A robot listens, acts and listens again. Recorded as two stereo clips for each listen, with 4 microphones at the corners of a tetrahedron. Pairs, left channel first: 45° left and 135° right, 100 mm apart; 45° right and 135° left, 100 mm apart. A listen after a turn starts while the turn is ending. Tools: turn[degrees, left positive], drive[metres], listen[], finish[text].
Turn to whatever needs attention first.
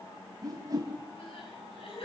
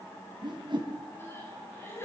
Thought: The crying: 20° left.
Action: turn[20]
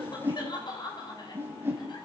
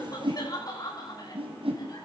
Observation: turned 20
Action: finish[Found it: crying, straight ahead, over 4 m away.]